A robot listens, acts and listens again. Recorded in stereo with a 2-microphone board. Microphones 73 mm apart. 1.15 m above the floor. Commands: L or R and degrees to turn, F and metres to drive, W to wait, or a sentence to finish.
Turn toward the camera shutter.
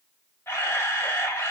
L35
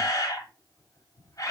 L105
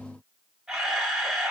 Found it: a camera shutter, straight ahead, 1 to 2 m away.